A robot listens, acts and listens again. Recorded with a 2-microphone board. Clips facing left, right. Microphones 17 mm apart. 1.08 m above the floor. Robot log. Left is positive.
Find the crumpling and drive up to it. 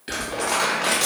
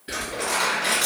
note: The crumpling: about 60° left or 120° left.
cmd yaw +60
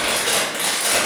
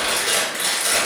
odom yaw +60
note: So it is at 50° left.
cmd yaw +50
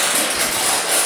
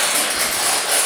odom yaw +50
note: The crumpling is now 10° left.
cmd yaw +10
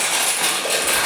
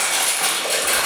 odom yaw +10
note: The crumpling is now 10° left.
cmd yaw +10
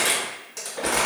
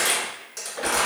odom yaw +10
cmd fwd 1.0
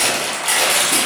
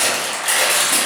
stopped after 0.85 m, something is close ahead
end: I am next to the crumpling.